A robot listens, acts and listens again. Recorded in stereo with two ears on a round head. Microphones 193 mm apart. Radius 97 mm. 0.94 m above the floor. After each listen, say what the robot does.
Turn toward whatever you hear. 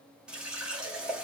Turn 30° right.
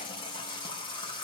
Turn 25° left.
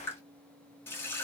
Turn 10° left.
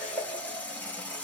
Found it: a running tap, straight ahead.